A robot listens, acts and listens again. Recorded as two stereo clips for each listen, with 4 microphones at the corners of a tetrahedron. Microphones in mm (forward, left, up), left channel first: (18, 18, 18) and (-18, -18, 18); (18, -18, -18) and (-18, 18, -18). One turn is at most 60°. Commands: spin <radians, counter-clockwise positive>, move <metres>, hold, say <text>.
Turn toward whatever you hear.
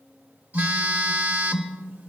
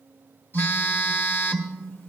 spin -1.05
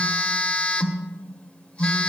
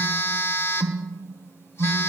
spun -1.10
spin -0.44
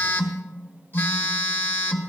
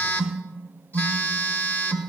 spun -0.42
say Found it: a phone buzzing, straight ahead, 1 to 2 m away.